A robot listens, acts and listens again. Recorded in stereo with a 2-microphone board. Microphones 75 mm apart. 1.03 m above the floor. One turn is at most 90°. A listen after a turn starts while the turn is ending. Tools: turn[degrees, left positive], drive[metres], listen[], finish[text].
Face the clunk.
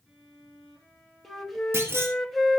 Thought: The clunk: about 35° right or 145° right.
Action: turn[-35]
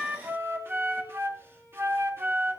Action: listen[]
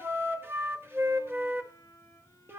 Action: finish[I heard a clunk, but can't make it out now. It was about straight ahead or 110° right.]